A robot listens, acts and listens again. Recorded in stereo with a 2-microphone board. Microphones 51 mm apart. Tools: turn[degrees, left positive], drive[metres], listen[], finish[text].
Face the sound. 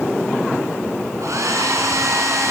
Action: turn[-90]
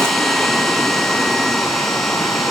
Action: finish[Facing the hair dryer.]